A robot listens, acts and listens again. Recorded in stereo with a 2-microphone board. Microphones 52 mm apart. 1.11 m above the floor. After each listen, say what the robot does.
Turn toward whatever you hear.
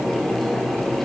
Keep listening.
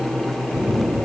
Turn 25° right.
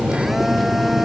Found it: a phone buzzing, straight ahead.